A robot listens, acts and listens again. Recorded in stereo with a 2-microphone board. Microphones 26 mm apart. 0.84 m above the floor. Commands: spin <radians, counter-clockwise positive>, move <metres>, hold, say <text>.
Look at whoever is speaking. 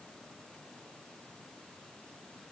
hold
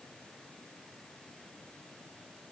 hold
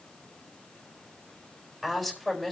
spin -0.52
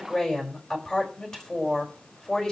spin 0.44
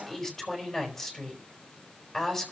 spin 0.17
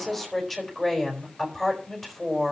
say Found it: a woman speaking, straight ahead.